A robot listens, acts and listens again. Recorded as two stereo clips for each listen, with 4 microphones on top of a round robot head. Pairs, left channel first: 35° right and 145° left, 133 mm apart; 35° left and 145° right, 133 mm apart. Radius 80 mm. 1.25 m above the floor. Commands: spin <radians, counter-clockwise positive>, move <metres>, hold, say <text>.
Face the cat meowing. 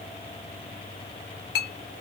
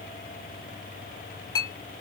hold
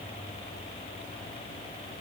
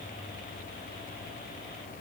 hold
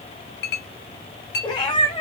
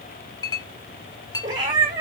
spin -1.57
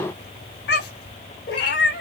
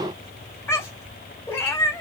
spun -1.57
spin -0.61
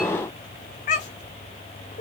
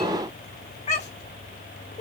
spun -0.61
say Facing the cat meowing.